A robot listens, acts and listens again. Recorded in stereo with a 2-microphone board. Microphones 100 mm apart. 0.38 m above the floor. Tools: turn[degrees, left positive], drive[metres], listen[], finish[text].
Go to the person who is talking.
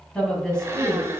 Action: turn[30]
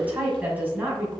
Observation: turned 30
Thought: So it is at 20° right.
Action: turn[-20]
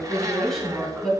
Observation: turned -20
Action: drive[1.0]
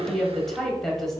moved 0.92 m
Action: drive[1.0]
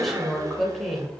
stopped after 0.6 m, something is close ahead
Action: finish[I am next to the woman speaking.]